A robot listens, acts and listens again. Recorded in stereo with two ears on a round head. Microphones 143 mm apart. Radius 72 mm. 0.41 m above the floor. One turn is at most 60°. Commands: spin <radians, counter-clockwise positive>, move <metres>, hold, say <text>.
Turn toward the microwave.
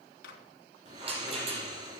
spin 1.05
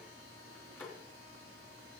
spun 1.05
spin 0.26
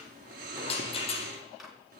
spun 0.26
say Found it: a microwave, straight ahead, 2 to 4 m away.